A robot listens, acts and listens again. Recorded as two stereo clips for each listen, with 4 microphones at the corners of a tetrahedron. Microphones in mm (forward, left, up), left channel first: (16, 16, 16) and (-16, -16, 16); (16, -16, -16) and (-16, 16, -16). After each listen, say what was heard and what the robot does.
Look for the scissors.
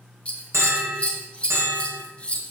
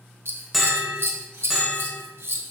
The scissors: 115° left. Turn 115° left.
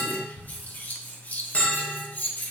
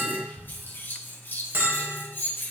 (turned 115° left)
Facing the scissors, 1 to 2 m away.